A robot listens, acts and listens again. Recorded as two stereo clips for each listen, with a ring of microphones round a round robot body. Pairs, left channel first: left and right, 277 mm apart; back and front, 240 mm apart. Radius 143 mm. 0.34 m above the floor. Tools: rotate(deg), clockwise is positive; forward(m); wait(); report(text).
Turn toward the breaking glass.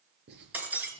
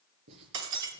report("Found it: breaking glass, straight ahead.")